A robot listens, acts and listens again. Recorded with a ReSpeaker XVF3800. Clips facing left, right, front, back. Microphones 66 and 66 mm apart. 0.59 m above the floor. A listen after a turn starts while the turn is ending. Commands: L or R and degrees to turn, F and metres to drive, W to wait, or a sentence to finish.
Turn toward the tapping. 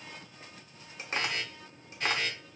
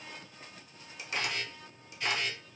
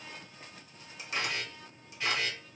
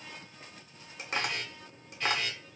L140
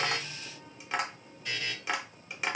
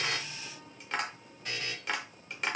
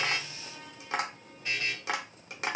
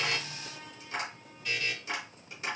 Facing the tapping.